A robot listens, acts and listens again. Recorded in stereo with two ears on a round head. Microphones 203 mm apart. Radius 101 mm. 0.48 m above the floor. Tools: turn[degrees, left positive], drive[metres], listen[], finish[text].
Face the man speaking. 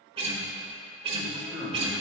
Action: turn[30]
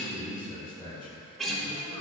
Thought: So it is at 160° left.
Action: turn[160]
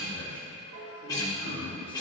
Thought: The man speaking is now 10° left.
Action: turn[10]
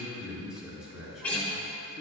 Action: finish[Facing the man speaking.]